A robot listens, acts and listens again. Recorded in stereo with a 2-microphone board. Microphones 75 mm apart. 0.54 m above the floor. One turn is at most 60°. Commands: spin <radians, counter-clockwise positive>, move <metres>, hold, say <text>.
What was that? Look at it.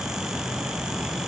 hold
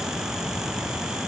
hold
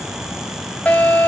spin 0.35
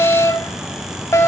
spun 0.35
spin 1.05
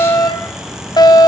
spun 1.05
spin 1.05
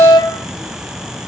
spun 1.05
spin 1.05
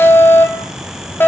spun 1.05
spin 0.52
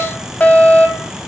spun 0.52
spin 0.35
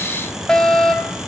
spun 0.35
spin 0.17
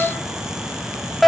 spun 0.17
say Facing the fire alarm.